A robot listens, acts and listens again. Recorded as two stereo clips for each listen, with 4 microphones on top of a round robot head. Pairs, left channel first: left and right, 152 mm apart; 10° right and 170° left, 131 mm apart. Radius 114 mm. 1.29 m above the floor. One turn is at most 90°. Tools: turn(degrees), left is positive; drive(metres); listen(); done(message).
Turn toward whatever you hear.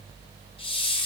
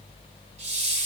turn(degrees=90)
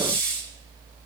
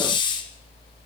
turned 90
turn(degrees=40)
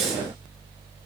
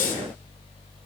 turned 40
done("Found it: a hiss, straight ahead, 1 to 2 m away.")